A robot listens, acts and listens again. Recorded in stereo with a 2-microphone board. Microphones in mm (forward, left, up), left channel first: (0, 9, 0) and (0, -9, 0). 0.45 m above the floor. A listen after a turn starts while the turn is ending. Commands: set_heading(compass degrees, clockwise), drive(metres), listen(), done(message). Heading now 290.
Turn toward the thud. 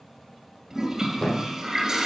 set_heading(260)
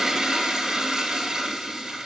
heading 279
listen()
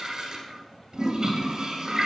done("I heard a thud, but can't make it out now. It was about 20° left or 140° left.")